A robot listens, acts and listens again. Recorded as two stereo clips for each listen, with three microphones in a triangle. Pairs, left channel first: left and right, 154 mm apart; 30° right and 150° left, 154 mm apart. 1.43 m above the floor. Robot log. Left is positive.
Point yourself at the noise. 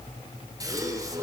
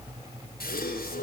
note: The gasp: 25° right.
cmd yaw -25
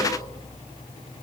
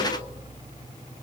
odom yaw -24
end: I heard a gasp from this way, but can't make it out now.